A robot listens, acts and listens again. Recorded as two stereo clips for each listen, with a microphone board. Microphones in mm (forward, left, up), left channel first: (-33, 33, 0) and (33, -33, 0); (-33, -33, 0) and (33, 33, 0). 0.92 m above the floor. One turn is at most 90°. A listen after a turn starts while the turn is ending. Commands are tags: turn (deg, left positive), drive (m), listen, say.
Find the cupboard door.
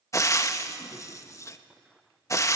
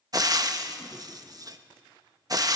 <listen/>
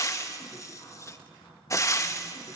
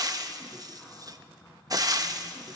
<turn deg="90"/>
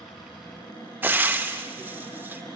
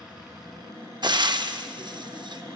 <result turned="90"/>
<turn deg="90"/>
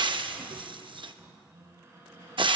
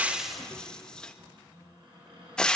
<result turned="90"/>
<turn deg="15"/>
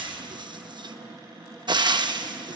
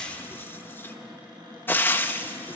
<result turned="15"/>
<say>Facing the cupboard door.</say>